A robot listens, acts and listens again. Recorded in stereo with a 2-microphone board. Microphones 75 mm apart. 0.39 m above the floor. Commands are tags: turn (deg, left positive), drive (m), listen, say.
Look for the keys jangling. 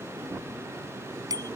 <listen/>
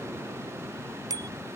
<listen/>
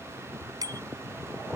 <say>I can't make out keys jangling to turn to.</say>